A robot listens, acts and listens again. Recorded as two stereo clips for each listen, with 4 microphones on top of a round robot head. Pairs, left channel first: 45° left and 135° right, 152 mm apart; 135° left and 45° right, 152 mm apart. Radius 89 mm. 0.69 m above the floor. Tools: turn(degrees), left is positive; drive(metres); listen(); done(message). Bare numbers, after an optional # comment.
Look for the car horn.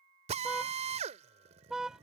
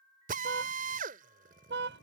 # The car horn: 45° right.
turn(-45)
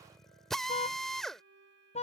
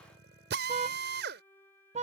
done("Found it: a car horn, straight ahead.")